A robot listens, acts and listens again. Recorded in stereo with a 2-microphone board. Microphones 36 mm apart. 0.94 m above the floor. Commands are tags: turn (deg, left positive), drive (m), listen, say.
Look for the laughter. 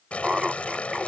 <turn deg="-30"/>
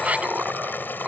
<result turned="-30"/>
<turn deg="-140"/>
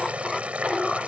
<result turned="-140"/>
<turn deg="10"/>
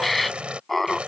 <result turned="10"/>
<say>Facing the laughter.</say>